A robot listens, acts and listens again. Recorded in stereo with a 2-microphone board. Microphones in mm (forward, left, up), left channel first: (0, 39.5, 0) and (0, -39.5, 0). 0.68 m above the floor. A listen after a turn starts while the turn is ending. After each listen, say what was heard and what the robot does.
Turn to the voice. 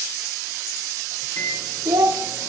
The child speaking: about 70° right or 110° right. Turn 70° right.
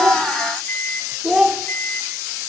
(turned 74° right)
So it is at 10° right. Turn 10° right.
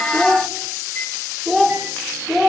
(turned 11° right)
Found it: a child speaking, straight ahead.